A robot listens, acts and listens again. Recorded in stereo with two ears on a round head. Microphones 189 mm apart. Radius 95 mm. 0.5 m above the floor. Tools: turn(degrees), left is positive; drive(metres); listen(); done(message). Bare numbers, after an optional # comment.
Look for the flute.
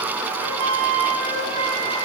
turn(-90)
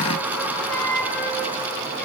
# So it is at 10° left.
turn(10)
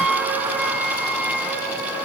done("Facing the flute.")